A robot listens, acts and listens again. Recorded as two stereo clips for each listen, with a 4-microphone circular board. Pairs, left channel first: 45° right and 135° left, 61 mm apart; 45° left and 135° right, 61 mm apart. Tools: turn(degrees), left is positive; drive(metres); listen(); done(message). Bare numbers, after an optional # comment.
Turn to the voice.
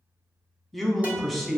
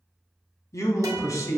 # The man speaking: 40° left.
turn(40)
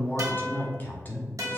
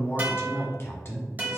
done("Found it: a man speaking, straight ahead, under 1 m away.")